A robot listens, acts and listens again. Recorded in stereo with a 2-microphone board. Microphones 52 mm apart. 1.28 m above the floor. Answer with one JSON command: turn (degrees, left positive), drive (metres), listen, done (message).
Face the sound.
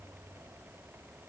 {"listen": true}
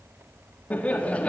{"turn": 25}
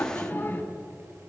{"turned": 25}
{"turn": 140}
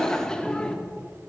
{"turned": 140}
{"turn": 20}
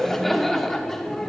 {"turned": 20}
{"turn": 10}
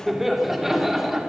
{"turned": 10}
{"done": "Found it: laughter, straight ahead."}